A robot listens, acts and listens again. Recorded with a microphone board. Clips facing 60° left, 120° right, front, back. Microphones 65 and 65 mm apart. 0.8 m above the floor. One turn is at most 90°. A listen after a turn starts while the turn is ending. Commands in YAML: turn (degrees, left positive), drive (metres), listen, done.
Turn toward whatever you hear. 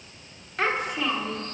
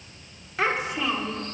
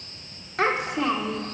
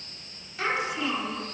turn: -35
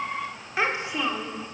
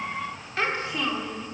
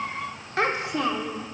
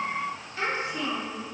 turn: -15
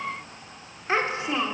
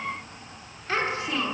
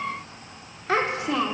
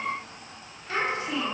done: "Facing the child speaking."